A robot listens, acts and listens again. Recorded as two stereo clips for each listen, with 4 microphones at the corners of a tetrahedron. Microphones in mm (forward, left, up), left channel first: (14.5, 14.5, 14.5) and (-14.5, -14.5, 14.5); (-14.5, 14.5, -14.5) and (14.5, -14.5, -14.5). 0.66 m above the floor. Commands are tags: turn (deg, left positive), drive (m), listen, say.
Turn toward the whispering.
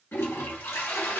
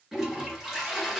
<listen/>
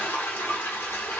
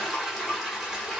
<listen/>
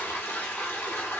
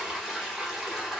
<say>I can't make out whispering, only a toilet flushing.</say>